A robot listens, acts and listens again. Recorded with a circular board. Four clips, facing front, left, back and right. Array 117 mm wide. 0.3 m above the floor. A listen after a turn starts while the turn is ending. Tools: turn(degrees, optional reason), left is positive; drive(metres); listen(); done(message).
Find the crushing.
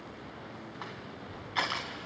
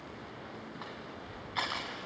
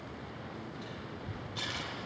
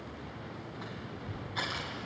turn(degrees=15, reason="The crushing: 15° left.")
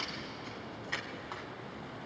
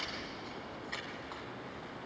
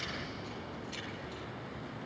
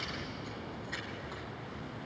listen()
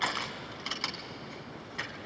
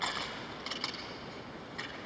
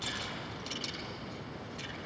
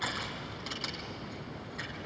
turn(degrees=10, reason="The crushing is now 10° left.")
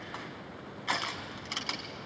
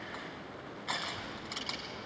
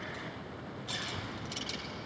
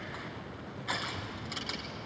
done("Facing the crushing, 2 to 4 m away.")